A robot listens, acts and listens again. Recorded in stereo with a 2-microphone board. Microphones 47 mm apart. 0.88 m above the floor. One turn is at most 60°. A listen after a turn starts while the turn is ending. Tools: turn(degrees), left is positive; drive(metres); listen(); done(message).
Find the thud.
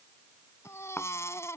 turn(degrees=45)
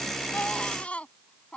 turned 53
listen()
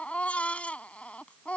done("I heard a thud, but can't make it out now. It was about 10° right or 85° left.")